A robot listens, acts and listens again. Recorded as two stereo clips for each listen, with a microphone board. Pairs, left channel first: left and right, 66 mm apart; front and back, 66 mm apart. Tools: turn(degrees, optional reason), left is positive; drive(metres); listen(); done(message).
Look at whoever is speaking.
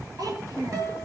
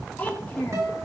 turn(degrees=-65, reason="The child speaking: 65° right.")
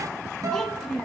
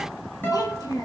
turn(degrees=10, reason="The child speaking is now 10° left.")
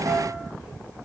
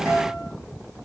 listen()
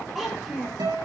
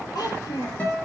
done("Found it: a child speaking, straight ahead, over 4 m away.")